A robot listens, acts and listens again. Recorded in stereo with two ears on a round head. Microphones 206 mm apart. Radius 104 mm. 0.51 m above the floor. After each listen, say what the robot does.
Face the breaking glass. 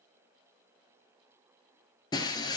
Turn 20° left.
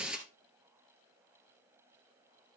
Found it: breaking glass, straight ahead.